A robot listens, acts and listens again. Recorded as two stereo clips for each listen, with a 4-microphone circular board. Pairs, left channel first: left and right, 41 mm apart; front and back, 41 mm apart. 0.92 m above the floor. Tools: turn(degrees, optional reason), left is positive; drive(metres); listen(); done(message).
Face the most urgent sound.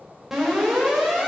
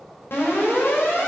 done("Facing the alarm, 2 to 4 m away.")